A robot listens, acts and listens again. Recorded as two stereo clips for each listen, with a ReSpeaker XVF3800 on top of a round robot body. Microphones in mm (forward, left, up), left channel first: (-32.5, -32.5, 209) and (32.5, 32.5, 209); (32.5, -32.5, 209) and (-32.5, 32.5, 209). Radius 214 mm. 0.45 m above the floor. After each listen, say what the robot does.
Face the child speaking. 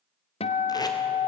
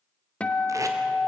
Keep listening.
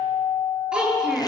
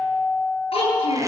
Turn 40° right.
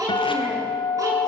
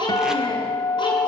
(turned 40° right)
Facing the child speaking.